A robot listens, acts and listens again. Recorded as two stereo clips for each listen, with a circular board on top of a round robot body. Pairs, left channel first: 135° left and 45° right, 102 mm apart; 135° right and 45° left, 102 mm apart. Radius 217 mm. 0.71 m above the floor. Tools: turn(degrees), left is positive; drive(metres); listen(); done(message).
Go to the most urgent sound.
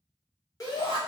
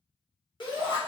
turn(degrees=-170)
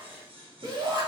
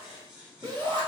drive(metres=1.0)
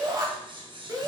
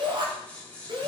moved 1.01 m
drive(metres=1.0)
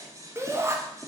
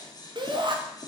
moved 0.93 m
turn(degrees=15)
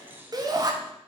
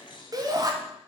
drive(metres=1.0)
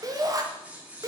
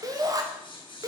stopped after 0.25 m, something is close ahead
done("I am next to the shout.")